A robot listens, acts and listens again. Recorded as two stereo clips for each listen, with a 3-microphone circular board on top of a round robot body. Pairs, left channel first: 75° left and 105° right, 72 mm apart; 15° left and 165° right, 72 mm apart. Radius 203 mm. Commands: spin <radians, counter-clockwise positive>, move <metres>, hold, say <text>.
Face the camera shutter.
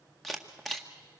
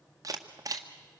spin 2.88
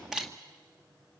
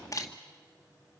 spin -0.44
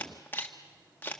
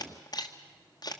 spin 0.26
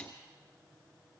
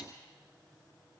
hold
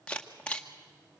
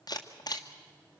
say Found it: a camera shutter, straight ahead.